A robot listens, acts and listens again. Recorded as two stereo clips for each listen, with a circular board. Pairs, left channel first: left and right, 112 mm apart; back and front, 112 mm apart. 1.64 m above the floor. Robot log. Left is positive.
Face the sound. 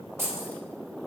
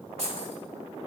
note: The keys jangling: 25° right.
cmd yaw -25
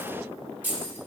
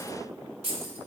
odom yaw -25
note: The keys jangling is now 20° right.
cmd yaw -20
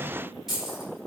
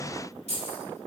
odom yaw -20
end: Found it: keys jangling, straight ahead.